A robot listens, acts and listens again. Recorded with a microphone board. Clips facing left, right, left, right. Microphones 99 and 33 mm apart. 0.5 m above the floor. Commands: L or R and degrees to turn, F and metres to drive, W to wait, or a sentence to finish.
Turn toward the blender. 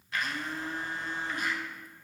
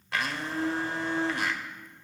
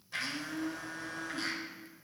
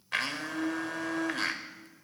R70
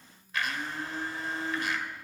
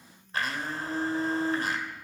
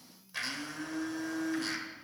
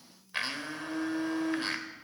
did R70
R35
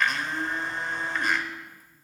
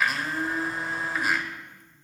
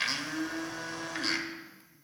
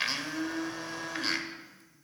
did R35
Facing the blender, under 1 m away.